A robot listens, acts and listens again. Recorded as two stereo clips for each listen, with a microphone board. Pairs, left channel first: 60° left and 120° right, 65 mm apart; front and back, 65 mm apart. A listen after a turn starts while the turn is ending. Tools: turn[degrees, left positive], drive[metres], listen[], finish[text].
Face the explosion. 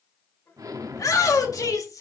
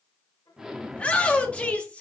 Thought: The explosion: 100° right.
Action: turn[-100]
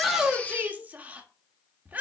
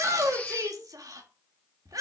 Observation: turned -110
Thought: Nothing new. It was at 10° left.
Action: turn[10]
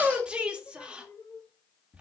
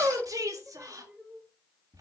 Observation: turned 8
Action: finish[Facing where the explosion came from. I can't hear it now.]